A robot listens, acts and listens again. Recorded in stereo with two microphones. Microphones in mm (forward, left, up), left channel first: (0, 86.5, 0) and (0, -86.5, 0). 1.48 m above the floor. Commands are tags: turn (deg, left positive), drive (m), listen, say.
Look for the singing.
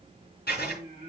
<turn deg="-35"/>
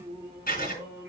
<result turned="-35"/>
<say>Found it: singing, straight ahead.</say>